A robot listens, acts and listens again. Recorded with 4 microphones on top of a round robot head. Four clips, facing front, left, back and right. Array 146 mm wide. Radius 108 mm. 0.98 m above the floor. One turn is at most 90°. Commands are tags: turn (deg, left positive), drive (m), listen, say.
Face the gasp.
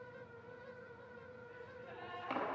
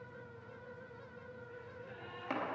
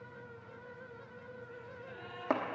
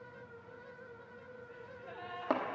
<turn deg="-80"/>
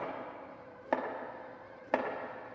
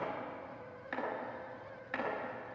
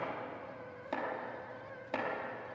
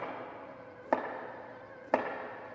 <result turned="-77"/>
<say>Facing where the gasp came from. I can't hear it now.</say>